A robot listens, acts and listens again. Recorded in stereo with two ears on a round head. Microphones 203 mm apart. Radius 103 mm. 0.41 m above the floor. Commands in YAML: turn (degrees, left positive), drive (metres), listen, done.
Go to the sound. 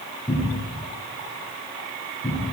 turn: 30
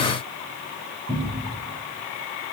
turn: -25
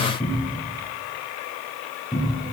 drive: 1.0
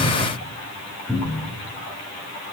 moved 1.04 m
drive: 1.0
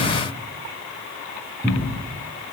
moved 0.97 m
turn: -10
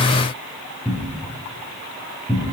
drive: 1.0
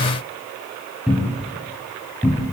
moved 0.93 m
drive: 1.0
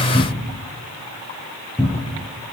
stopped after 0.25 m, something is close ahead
done: "Arrived at the cupboard door, straight ahead."